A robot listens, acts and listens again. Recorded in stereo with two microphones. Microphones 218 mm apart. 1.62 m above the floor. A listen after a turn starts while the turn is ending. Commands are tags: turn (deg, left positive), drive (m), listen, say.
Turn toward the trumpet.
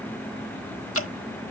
<listen/>
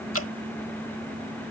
<listen/>
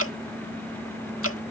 <say>I can't make out a trumpet to turn to.</say>